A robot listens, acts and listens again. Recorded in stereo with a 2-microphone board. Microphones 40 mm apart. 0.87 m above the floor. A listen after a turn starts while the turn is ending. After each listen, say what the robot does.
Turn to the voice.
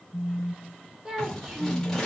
Turn 20° right.
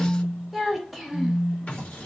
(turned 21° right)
Found it: a child speaking, straight ahead.